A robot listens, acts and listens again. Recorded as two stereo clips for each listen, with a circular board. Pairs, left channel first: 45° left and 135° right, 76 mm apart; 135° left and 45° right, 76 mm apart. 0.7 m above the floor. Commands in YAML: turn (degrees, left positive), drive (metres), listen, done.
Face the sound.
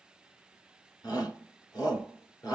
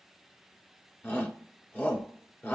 turn: 70
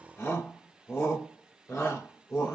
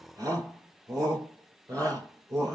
done: "Facing the shout, 2 to 4 m away."